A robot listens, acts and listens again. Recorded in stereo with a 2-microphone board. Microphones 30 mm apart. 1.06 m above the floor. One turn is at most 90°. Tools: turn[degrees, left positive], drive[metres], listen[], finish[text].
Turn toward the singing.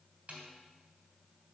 Action: listen[]
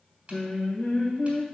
Thought: The singing: about 45° left or 135° left.
Action: turn[45]
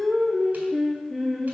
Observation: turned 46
Action: finish[Found it: singing, straight ahead, 1 to 2 m away.]